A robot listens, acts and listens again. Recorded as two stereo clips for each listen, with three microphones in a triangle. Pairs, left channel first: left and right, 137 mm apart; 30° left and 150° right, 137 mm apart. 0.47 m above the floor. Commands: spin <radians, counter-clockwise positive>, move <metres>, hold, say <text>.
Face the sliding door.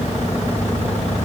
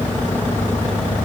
hold
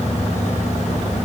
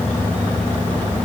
hold
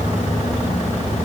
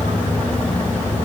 say I can't make out a sliding door to turn to.